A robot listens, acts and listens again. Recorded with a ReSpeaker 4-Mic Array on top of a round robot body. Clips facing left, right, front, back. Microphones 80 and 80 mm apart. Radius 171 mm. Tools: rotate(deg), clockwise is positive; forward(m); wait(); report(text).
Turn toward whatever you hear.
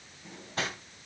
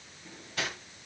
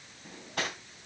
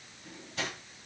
rotate(-35)
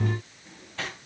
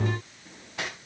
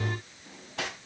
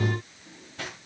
rotate(10)
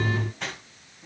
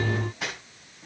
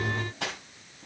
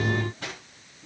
report("Found it: cutlery clinking, straight ahead.")